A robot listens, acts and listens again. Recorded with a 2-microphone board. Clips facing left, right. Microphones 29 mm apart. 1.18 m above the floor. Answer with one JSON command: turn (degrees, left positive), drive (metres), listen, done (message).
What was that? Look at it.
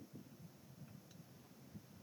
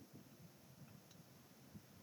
{"listen": true}
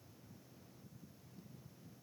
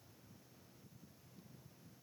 {"listen": true}
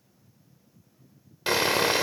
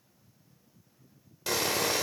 {"turn": 45}
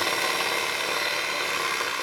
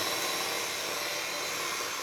{"turn": 90}
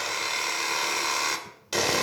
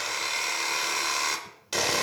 {"done": "Found it: sawing, straight ahead, 2 to 4 m away."}